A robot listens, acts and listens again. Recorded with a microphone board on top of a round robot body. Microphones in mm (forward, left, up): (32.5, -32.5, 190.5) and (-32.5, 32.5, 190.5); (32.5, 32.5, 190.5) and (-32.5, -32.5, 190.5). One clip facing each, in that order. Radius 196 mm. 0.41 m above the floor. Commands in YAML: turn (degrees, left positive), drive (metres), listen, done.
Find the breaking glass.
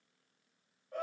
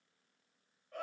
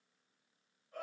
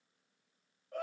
listen: true
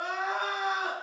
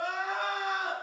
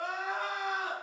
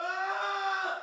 listen: true
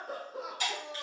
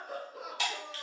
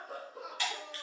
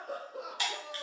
turn: 150
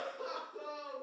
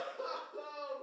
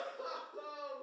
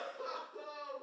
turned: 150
done: "Facing where the breaking glass came from. I can't hear it now."